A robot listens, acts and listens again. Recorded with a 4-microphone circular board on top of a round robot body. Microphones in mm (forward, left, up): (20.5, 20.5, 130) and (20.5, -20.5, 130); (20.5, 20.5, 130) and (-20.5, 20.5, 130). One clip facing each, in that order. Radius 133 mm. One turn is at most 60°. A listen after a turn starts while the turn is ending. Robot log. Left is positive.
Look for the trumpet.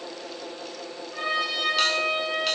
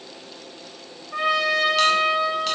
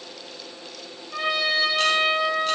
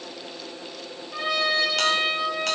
note: The trumpet: 80° right.
cmd yaw -60
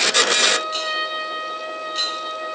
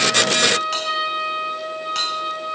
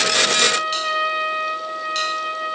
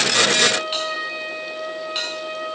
end: Facing the trumpet, over 4 m away.